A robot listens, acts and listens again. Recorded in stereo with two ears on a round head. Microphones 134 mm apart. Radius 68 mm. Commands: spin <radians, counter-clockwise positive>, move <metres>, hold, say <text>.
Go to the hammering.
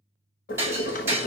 spin -0.26
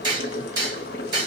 spin -2.62
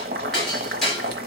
move 1.0
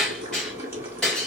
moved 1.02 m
move 1.0
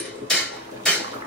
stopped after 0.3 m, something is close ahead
say Arrived at the hammering, straight ahead.